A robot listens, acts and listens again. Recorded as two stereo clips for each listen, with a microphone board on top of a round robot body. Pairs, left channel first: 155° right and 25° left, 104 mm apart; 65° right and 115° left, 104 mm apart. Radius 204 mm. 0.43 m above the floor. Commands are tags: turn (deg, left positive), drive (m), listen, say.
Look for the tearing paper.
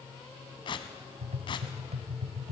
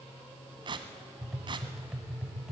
<turn deg="160"/>
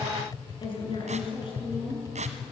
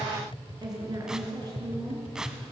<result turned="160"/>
<turn deg="30"/>
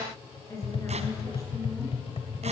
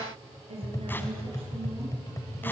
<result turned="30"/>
<listen/>
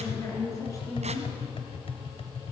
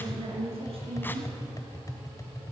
<listen/>
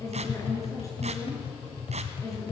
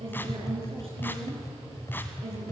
<say>I heard tearing paper from this way, but can't make it out now.</say>